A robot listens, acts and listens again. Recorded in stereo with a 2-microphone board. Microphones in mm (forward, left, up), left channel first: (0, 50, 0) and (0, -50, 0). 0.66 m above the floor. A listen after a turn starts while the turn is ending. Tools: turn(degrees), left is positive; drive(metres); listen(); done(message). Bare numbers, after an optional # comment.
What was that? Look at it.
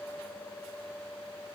listen()
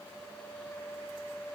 listen()
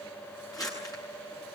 # The crumpling: about 35° left or 145° left.
turn(35)
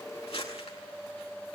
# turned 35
# So it is at 110° left.
turn(110)
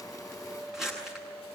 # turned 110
done("Facing the crumpling, over 4 m away.")